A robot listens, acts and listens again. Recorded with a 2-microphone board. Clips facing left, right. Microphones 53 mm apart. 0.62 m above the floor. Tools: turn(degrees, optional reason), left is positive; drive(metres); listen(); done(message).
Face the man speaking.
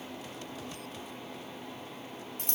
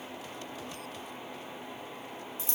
listen()
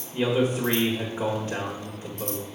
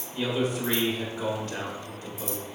turn(degrees=20, reason="The man speaking: about 20° left or 160° left.")
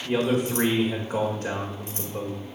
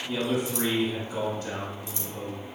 turn(degrees=135, reason="So it is at 135° left.")
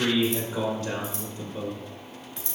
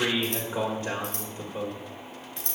turn(degrees=-20, reason="The man speaking is now 20° right.")
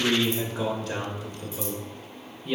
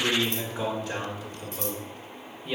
done("Found it: a man speaking, straight ahead.")